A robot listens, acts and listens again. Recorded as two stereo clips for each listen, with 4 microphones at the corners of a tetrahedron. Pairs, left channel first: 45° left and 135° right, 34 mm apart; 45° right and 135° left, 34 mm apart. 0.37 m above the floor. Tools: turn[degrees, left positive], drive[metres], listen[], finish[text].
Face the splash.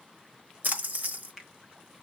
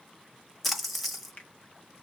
Thought: The splash: 130° right.
Action: turn[-130]
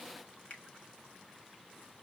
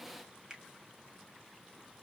Action: finish[Facing where the splash came from. I can't hear it now.]